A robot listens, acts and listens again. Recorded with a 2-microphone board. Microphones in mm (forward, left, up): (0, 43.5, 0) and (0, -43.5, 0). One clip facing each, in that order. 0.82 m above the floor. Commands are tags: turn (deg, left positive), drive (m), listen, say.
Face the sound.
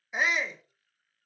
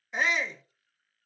<turn deg="30"/>
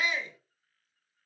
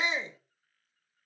<turn deg="-25"/>
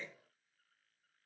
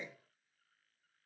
<turn deg="-15"/>
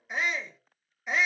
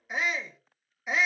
<say>Facing the shout, under 1 m away.</say>